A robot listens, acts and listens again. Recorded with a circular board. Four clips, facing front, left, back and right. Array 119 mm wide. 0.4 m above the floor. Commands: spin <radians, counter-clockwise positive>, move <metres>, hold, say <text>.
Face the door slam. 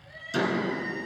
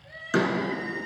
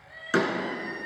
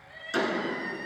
spin 2.71
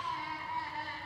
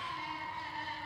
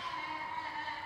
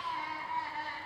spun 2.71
say Facing where the door slam came from. I can't hear it now.